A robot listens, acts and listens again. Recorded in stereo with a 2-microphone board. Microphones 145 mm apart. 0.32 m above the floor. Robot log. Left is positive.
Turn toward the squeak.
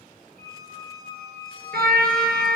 note: The squeak: about 75° left or 105° left.
cmd yaw +75
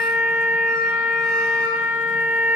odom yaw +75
cmd idle
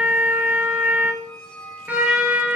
end: Found it: a squeak, straight ahead.